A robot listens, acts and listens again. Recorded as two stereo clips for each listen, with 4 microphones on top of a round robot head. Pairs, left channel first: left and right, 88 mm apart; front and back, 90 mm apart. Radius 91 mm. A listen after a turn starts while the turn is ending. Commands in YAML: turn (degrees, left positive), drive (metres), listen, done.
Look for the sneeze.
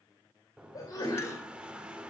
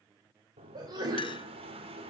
turn: 140
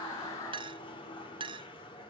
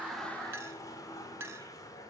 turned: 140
done: "Facing where the sneeze came from. I can't hear it now."